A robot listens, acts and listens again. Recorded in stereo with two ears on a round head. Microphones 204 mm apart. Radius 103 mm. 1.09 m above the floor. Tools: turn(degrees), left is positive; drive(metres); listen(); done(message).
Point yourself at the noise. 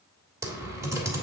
turn(degrees=-30)
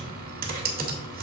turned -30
turn(degrees=-135)
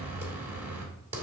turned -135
turn(degrees=-10)
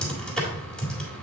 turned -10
done("Facing the typing on a keyboard.")